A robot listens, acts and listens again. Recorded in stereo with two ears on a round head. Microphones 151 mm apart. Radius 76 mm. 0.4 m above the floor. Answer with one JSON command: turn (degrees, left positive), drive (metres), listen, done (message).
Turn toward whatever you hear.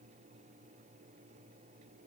{"listen": true}
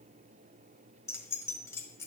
{"turn": 15}
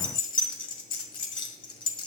{"turn": 150}
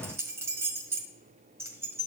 {"turn": -15}
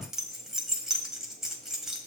{"done": "Facing the keys jangling."}